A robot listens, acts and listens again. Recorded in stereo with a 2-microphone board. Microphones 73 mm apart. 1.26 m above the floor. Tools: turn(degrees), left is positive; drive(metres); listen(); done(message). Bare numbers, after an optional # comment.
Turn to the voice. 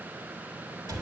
listen()
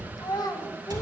# The child speaking: about 60° left or 120° left.
turn(60)
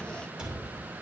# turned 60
listen()
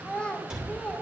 # So it is at 15° left.
turn(15)
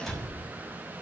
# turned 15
listen()
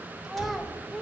done("Found it: a child speaking, straight ahead, under 1 m away.")